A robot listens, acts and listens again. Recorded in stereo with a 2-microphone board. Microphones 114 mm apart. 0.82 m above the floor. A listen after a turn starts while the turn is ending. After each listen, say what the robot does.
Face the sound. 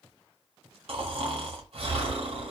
Turn 60° right.
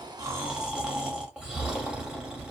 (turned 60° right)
Turn 10° right.
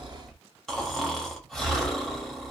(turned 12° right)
Found it: snoring, straight ahead.